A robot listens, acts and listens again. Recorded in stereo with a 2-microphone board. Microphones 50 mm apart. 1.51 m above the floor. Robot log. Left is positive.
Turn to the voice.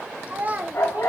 note: The child speaking: about 35° right or 145° right.
cmd yaw -35
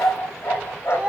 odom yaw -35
note: So it is at 20° right.
cmd yaw -20
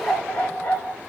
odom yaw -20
cmd idle
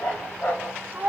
note: The child speaking is now 35° right.
cmd yaw -35
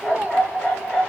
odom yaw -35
note: The child speaking is now 30° right.
cmd yaw -30
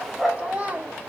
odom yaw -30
note: The child speaking is now 25° right.
cmd yaw -25
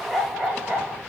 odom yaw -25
cmd idle
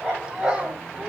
note: The child speaking is now 15° right.
cmd yaw -15
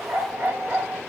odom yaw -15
cmd idle
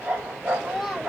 end: Facing the child speaking.